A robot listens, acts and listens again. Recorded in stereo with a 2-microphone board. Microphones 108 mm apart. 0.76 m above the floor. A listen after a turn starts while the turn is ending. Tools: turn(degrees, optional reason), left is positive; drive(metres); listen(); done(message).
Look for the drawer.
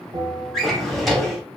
turn(degrees=30)
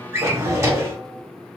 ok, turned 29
turn(degrees=-30, reason="So it is at 30° right.")
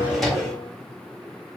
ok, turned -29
done("Facing the drawer, under 1 m away.")